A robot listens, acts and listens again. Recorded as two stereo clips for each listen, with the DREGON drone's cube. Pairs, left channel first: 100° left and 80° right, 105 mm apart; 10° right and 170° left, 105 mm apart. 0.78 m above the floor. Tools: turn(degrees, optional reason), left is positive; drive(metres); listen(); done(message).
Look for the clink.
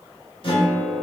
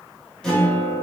listen()
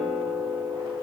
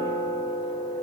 listen()
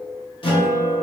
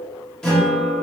done("I can't make out a clink to turn to.")